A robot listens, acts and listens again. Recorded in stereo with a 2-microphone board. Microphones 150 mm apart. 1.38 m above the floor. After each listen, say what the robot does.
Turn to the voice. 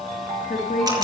Turn 65° left.
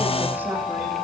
Keep listening.
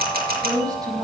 Turn 25° right.
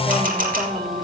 Keep listening.
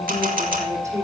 Turn 20° right.
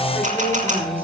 Keep listening.
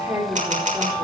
Turn 15° right.
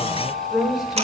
Facing the woman speaking, 2 to 4 m away.